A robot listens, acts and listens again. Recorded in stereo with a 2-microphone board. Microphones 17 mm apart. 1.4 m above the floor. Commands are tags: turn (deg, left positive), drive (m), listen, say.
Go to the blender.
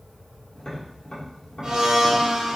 <turn deg="-55"/>
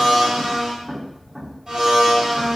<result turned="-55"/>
<turn deg="-50"/>
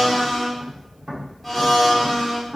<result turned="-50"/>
<drive m="1.0"/>
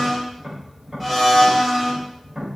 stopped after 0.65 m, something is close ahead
<say>I am next to the blender.</say>